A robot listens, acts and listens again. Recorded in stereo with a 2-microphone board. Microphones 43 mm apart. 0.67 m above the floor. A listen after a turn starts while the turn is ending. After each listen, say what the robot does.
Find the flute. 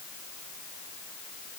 Keep listening.
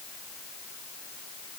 Keep listening.
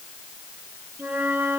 Turn 40° right.
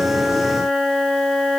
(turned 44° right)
Facing the flute.